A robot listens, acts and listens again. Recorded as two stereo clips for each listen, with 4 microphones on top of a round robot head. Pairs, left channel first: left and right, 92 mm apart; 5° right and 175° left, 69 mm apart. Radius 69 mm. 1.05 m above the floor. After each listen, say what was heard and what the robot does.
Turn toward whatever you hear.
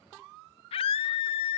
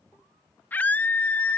The scream: 60° left. Turn 60° left.
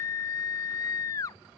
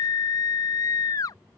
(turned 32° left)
The scream is now 30° left. Turn 30° left.
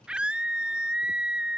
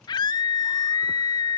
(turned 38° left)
The scream is now 10° right. Turn 10° right.
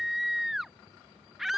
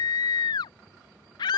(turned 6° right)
Facing the scream.